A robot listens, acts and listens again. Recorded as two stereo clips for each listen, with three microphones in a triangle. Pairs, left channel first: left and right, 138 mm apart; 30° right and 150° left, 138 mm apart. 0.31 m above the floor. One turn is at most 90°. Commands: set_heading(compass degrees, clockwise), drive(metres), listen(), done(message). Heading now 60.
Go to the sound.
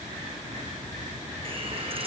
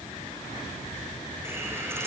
set_heading(150)
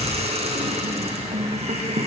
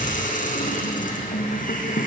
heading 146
set_heading(196)
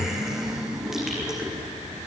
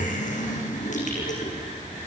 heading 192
drive(1.0)
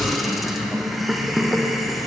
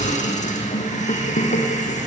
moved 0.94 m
drive(1.0)
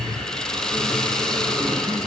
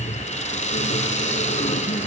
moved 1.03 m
drive(1.0)
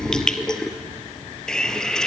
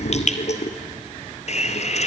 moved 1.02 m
drive(1.0)
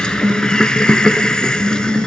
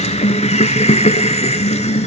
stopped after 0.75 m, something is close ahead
done("I am next to the hiss.")